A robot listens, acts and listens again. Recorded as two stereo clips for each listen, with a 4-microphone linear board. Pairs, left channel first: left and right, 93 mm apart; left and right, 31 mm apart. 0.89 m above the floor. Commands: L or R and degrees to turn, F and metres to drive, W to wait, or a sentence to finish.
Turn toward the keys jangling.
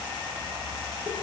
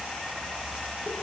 W
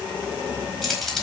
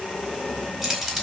L30
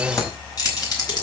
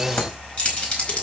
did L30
L135
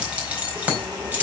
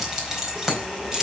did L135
R15
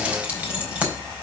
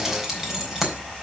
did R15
R10
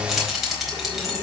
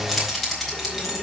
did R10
Facing the keys jangling, over 4 m away.